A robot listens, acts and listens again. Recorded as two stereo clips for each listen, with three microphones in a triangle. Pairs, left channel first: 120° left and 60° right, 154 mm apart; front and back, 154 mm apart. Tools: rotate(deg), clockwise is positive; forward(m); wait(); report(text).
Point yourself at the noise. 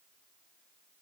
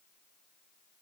wait()
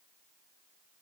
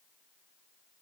wait()
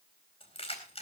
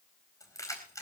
rotate(-70)
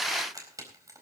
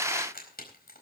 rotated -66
rotate(-10)
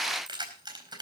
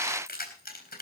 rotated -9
report("Found it: keys jangling, straight ahead, over 4 m away.")